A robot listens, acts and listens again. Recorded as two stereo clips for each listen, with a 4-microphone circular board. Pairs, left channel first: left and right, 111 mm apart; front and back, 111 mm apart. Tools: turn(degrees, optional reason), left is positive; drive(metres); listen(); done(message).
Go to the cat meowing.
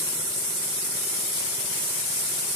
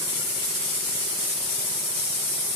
listen()
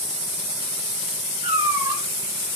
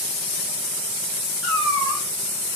turn(degrees=-85, reason="The cat meowing: 85° right.")
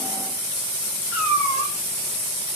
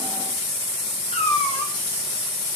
turn(degrees=-20, reason="The cat meowing is now 20° right.")
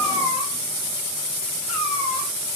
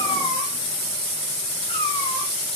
drive(metres=1.0)
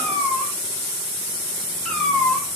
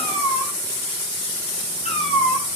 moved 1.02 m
drive(metres=1.0)
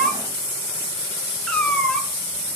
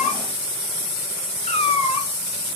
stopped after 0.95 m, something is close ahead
turn(degrees=10, reason="The cat meowing is now 10° left.")
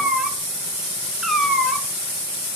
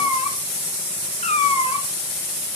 done("Arrived at the cat meowing, straight ahead.")